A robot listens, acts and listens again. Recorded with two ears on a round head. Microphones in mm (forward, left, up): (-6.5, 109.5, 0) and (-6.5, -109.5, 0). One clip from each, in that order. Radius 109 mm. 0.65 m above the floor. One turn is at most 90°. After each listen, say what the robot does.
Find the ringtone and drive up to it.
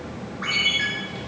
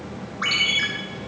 Turn 90° right.
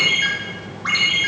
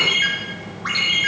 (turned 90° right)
Drive 1.0 m forward.
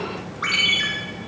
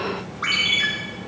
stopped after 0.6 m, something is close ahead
Blocked. The ringtone is further on, straight ahead.